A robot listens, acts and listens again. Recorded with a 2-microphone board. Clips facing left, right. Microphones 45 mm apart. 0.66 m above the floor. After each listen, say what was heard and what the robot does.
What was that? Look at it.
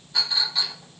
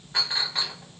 The clink: about 40° right or 140° right. Turn 40° right.
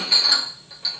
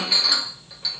Facing the clink.